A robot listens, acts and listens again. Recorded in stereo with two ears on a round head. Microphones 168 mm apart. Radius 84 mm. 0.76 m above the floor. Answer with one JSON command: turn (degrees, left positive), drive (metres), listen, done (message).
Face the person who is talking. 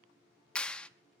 {"listen": true}
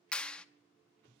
{"listen": true}
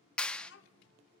{"turn": 65}
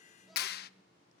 {"done": "Facing the child speaking."}